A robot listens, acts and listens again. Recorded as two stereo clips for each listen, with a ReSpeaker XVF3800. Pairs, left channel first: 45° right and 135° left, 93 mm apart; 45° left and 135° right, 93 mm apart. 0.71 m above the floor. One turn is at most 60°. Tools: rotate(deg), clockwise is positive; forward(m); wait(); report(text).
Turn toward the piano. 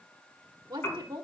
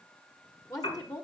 rotate(-25)
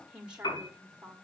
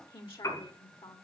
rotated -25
report("Facing the piano, over 4 m away.")